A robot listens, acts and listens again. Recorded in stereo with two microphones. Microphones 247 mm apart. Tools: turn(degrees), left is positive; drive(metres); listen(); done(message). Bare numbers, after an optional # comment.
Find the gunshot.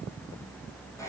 listen()
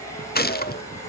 # The gunshot: about 35° left or 145° left.
turn(35)
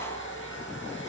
listen()
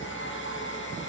done("I heard a gunshot, but can't make it out now. It was about straight ahead or 110° left.")